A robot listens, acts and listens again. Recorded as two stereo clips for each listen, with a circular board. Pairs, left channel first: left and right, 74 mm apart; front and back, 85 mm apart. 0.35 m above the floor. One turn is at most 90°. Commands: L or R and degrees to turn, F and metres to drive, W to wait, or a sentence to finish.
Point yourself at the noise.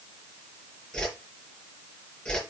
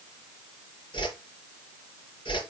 L10
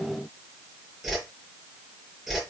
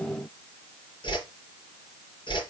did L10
Found it: a whoosh, straight ahead.